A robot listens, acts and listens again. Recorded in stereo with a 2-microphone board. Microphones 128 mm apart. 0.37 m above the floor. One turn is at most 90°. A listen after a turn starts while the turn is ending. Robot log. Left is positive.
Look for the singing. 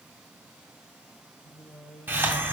note: The singing: about 60° left or 120° left.
cmd yaw +60
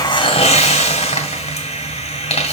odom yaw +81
cmd idle
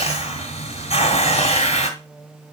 note: So it is at 10° right.
cmd yaw -10
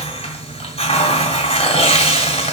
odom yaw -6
cmd idle
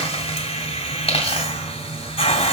cmd idle
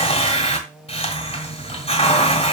end: Found it: singing, straight ahead.